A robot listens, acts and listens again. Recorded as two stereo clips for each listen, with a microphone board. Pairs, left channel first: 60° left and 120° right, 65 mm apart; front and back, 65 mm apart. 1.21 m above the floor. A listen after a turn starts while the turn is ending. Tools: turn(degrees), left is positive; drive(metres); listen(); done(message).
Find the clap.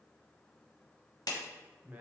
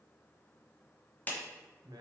turn(degrees=65)
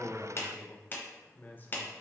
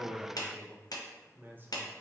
done("Facing the clap, under 1 m away.")